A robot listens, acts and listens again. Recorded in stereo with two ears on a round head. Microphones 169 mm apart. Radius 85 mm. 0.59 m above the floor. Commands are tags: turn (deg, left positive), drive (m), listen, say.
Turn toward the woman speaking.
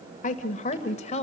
<turn deg="35"/>
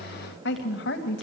<turn deg="115"/>
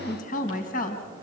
<turn deg="45"/>
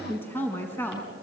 <turn deg="10"/>
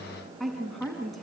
<say>Facing the woman speaking.</say>